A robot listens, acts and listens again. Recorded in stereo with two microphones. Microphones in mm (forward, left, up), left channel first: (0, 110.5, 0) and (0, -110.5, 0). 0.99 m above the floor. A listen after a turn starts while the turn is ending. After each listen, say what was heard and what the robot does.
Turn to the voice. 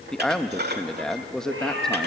Turn 30° left.
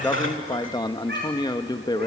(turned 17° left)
So it is at 160° left. Turn 160° left.
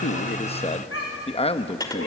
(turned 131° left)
The man speaking is now 30° left. Turn 30° left.
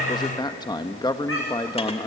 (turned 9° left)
The man speaking is now 20° left. Turn 20° left.
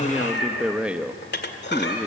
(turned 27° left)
Facing the man speaking.